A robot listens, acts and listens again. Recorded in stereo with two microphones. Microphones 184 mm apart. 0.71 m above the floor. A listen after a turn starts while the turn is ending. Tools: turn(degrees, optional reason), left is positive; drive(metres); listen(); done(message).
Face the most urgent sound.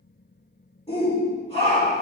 turn(degrees=35, reason="The shout: about 35° left or 145° left.")
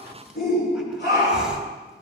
turn(degrees=105, reason="So it is at 105° left.")
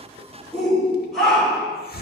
done("Found it: a shout, straight ahead, 2 to 4 m away.")